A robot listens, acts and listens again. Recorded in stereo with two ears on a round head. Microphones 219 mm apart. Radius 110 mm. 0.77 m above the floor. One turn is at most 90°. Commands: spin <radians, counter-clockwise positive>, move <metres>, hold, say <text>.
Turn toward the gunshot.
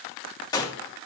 spin 0.26
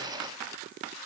hold
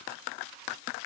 say I heard a gunshot, but can't make it out now. It was about straight ahead or 150° left.